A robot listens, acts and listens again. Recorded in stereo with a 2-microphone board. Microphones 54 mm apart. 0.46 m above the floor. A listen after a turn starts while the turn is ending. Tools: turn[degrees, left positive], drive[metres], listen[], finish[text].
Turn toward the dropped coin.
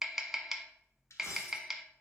Thought: The dropped coin: about 65° left or 115° left.
Action: turn[65]
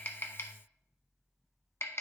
Action: listen[]
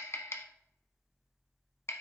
Action: finish[I heard a dropped coin, but can't make it out now. It was about straight ahead or 50° left.]